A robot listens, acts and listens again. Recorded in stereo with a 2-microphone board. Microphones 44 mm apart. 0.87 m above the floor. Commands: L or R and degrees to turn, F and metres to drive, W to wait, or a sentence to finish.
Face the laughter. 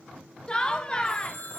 L25
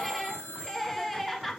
Found it: laughter, straight ahead.